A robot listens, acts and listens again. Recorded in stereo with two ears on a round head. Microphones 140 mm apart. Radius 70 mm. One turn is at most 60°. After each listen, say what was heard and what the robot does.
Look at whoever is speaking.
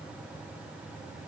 Keep listening.
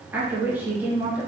Turn 30° right.
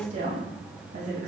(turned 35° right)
So it is at 130° right. Turn 60° right.
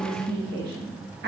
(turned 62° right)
The woman speaking is now 70° right. Turn 60° right.
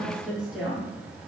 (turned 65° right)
Found it: a woman speaking, straight ahead, 1 to 2 m away.